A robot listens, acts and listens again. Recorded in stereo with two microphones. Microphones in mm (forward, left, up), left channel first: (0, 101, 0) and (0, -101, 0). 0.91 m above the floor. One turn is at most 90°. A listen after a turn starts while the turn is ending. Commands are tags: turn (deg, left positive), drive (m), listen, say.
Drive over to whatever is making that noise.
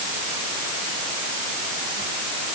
<listen/>
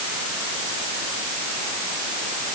<listen/>
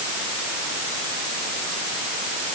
<say>I can't make out anything to turn to.</say>